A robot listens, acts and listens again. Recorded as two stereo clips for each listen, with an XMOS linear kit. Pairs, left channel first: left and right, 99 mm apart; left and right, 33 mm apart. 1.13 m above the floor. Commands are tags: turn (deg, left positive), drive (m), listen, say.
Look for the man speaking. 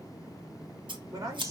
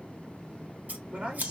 <turn deg="-35"/>
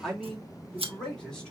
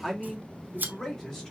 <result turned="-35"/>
<turn deg="10"/>
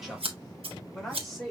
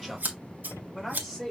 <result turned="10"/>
<say>Found it: a man speaking, straight ahead.</say>